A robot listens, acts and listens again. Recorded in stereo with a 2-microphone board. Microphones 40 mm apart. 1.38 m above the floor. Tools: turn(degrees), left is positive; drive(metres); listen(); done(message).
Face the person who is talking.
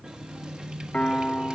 listen()
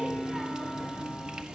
listen()
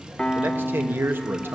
turn(degrees=-65)
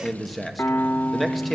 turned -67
done("Found it: a man speaking, straight ahead.")